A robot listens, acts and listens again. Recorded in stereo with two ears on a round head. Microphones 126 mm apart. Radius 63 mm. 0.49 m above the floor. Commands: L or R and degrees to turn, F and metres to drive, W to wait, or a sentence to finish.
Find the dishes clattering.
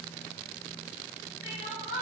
W
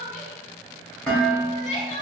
L30
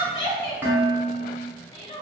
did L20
R15
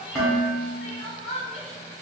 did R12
Found it: dishes clattering, straight ahead.